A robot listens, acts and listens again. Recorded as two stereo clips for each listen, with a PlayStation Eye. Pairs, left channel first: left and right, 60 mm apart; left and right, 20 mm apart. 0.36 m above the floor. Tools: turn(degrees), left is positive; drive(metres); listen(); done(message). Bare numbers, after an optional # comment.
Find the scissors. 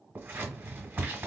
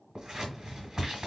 # The scissors: about 35° right or 145° right.
turn(-35)
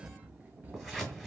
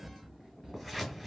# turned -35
done("Facing the scissors, 1 to 2 m away.")